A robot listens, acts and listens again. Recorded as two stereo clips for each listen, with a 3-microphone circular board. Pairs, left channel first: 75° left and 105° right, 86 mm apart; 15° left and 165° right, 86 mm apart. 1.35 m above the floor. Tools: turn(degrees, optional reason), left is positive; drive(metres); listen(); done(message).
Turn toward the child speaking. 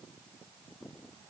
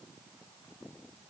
listen()
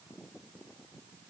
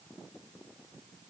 listen()
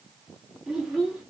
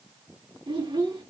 turn(degrees=165, reason="The child speaking: 165° left.")
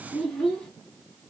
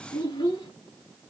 turn(degrees=-10, reason="The child speaking is now 10° right.")
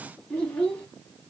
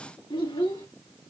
done("Found it: a child speaking, straight ahead.")